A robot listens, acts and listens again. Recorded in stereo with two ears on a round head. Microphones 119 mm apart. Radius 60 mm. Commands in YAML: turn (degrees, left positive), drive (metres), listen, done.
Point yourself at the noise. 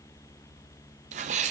turn: -60
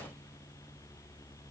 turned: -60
listen: true
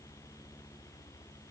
done: "I heard a sneeze, but can't make it out now. It was about straight ahead or 60° right."